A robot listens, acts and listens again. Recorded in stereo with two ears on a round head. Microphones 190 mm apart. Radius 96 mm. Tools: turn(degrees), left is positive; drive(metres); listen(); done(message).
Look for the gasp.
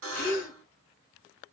turn(degrees=45)
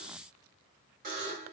listen()
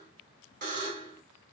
done("I heard a gasp, but can't make it out now. It was about straight ahead or 90° left.")